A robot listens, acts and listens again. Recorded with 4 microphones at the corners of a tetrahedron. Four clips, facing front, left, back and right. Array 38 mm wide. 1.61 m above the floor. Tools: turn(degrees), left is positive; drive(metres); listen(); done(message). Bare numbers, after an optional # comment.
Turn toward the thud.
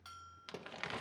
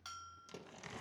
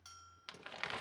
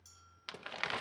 # The thud: 25° right.
turn(-25)
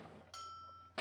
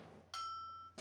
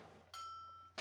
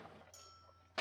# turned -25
done("I heard a thud from this way, but can't make it out now.")